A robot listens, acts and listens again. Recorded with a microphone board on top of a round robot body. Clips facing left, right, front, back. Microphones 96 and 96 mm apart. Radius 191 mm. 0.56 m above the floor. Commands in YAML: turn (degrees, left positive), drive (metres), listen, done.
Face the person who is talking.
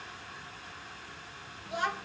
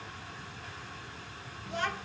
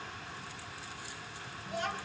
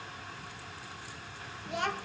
turn: 170
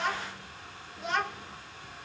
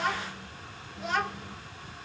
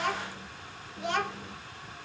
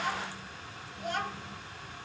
done: "Facing the child speaking, 2 to 4 m away."